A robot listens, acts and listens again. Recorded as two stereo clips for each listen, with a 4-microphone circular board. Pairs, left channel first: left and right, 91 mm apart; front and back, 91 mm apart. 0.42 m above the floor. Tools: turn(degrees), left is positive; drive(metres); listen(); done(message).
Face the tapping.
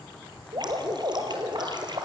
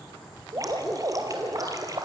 listen()
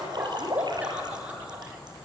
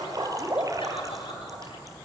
listen()
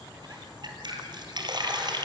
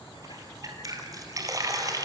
done("I can't make out tapping, only dripping.")